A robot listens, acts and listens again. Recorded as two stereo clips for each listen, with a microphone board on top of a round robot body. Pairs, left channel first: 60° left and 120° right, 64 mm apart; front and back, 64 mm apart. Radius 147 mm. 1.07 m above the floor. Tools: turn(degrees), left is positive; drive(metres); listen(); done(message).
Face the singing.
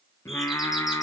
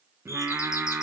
turn(degrees=105)
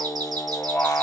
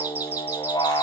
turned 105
done("Facing the singing, 1 to 2 m away.")